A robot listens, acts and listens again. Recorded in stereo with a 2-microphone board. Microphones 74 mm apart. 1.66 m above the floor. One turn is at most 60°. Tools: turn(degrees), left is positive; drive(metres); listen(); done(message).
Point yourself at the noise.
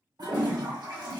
turn(degrees=-60)
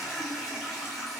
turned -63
done("Found it: a toilet flushing, straight ahead, 1 to 2 m away.")